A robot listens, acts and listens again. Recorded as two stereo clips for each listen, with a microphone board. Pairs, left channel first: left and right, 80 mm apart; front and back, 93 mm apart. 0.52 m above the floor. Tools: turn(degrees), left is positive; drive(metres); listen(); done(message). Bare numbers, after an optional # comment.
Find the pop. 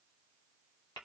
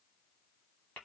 listen()
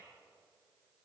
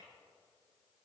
listen()
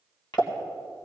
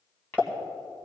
# The pop: 105° left.
turn(105)
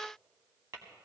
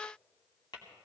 done("Facing where the pop came from. I can't hear it now.")